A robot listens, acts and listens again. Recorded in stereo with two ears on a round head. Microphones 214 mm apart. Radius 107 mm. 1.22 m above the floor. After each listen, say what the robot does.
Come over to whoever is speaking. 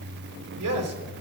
Turn 70° right.
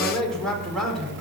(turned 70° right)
Drive 1.0 m forward.
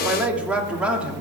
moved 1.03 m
Drive 1.0 m forward.
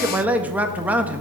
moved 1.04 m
Drive 1.0 m forward.
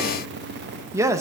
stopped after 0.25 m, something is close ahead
Turn 10° right.
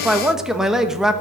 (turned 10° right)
Arrived at the man speaking, straight ahead.